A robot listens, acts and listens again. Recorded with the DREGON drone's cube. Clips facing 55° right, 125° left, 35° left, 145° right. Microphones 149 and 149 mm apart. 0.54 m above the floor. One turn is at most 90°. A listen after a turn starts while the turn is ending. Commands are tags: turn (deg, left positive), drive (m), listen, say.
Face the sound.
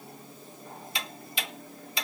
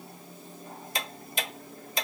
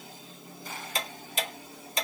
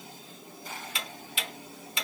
<turn deg="80"/>
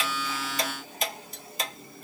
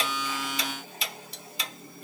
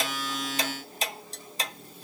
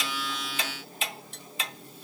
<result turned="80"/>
<turn deg="-15"/>
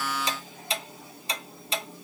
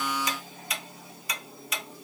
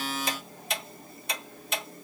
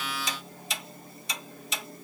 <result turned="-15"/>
<say>Found it: ticking, straight ahead, under 1 m away.</say>